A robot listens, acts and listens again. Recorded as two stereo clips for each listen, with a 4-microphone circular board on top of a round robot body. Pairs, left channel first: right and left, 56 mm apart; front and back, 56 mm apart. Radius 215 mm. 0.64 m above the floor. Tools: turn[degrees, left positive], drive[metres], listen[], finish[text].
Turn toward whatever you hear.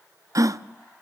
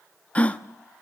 Thought: The gasp: 70° left.
Action: turn[70]
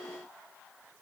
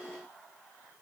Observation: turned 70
Action: finish[I heard a gasp from this way, but can't make it out now.]